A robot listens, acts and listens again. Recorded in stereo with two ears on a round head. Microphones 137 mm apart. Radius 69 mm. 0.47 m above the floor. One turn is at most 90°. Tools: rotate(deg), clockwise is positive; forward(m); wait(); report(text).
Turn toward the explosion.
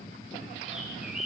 wait()
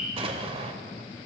rotate(40)
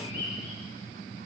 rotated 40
wait()
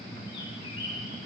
report("I heard an explosion, but can't make it out now. It was about straight ahead or 100° right.")